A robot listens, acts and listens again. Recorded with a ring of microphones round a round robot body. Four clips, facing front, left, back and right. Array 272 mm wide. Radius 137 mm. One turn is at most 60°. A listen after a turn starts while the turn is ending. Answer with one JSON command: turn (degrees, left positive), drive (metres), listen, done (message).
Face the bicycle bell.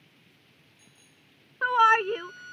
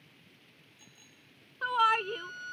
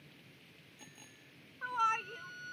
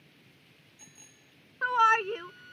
{"turn": -60}
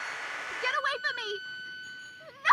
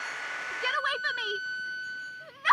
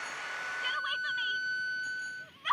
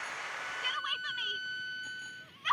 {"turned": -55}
{"turn": -60}
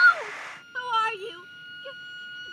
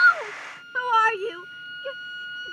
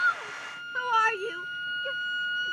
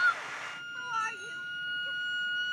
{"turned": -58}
{"turn": -50}
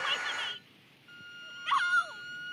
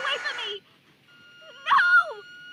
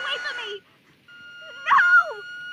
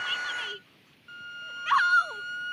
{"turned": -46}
{"done": "Facing where the bicycle bell came from. I can't hear it now."}